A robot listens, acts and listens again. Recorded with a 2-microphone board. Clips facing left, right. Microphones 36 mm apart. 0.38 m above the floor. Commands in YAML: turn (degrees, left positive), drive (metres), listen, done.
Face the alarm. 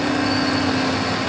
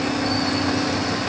listen: true
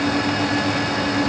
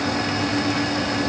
listen: true
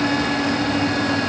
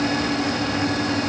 done: "I can't make out an alarm to turn to."